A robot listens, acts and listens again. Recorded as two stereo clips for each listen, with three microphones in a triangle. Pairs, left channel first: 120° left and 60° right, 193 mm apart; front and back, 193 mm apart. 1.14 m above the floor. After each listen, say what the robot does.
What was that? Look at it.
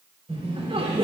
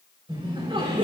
Turn 120° right.
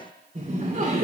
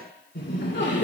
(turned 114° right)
Turn 15° right.
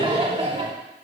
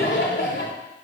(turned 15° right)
Facing the laughter, 2 to 4 m away.